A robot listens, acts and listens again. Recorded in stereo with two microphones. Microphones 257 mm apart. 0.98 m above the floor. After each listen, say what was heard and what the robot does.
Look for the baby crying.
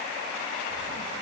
Keep listening.
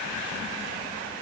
Keep listening.
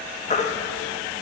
The baby crying: about 25° left or 155° left. Turn 25° left.
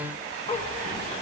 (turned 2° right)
Keep listening.
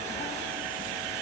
Keep listening.
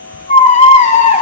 The baby crying: about 25° left or 155° left. Turn 25° left.
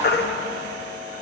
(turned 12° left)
So it is at 140° left. Turn 140° left.
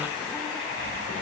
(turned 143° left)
Keep listening.
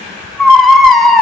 Facing the baby crying, under 1 m away.